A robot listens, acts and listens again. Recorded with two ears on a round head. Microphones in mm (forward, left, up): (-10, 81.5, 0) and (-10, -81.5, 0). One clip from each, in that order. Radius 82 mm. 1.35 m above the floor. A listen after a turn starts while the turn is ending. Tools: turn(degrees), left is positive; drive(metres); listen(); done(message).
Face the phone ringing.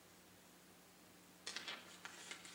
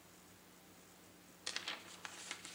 listen()
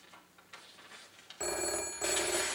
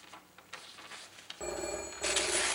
turn(degrees=45)
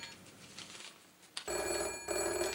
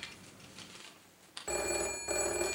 done("Found it: a phone ringing, straight ahead.")